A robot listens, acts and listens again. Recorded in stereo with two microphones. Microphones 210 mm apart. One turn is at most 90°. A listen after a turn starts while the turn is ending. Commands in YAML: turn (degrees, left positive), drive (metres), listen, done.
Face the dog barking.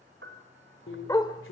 turn: 20
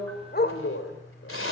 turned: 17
turn: 90
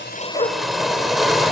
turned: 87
turn: 40
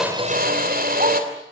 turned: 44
listen: true
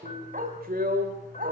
turn: -40
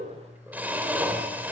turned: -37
listen: true
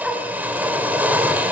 done: "Found it: a dog barking, straight ahead."